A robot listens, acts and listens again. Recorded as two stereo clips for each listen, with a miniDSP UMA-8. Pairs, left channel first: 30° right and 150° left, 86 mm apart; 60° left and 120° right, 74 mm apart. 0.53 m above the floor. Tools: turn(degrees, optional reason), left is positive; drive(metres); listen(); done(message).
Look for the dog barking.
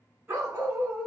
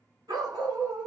turn(degrees=-140, reason="The dog barking: 140° right.")
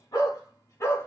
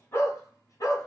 turn(degrees=25, reason="The dog barking is now 25° left.")
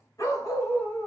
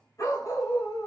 turn(degrees=35, reason="The dog barking is now 35° left.")
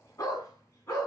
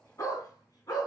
turn(degrees=25, reason="The dog barking is now 25° left.")
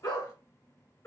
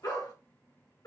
turn(degrees=30, reason="The dog barking is now 30° left.")
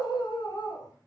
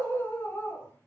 done("Facing the dog barking.")